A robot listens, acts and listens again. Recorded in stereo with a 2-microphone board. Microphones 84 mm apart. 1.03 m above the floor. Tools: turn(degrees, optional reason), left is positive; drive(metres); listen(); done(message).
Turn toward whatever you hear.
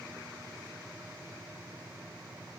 listen()
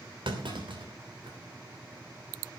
turn(degrees=-90)
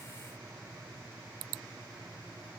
done("I heard a clunk from this way, but can't make it out now.")